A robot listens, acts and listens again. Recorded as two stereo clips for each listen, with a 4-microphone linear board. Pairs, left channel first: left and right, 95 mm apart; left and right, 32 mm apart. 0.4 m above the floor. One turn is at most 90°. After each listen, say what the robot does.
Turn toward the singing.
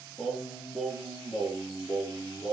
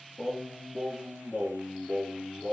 Turn 30° left.
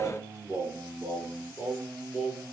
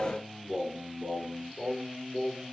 Facing the singing.